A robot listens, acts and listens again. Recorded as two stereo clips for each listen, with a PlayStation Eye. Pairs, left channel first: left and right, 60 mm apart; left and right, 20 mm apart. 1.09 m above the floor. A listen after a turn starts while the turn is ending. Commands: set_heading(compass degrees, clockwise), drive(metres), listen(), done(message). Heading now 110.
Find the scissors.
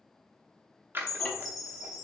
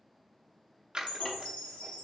set_heading(150)
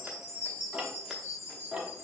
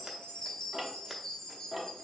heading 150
listen()
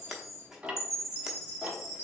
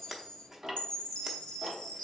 set_heading(160)
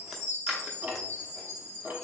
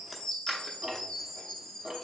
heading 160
listen()
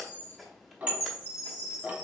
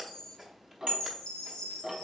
listen()
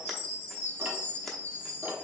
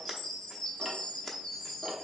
done("Facing the scissors, under 1 m away.")